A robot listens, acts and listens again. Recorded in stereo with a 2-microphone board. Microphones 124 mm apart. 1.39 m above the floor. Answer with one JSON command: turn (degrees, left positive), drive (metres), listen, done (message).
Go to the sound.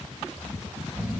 {"turn": -30}
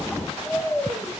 {"turn": 10}
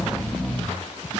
{"drive": 1.0}
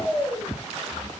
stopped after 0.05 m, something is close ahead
{"done": "Blocked. The snoring is further on, straight ahead."}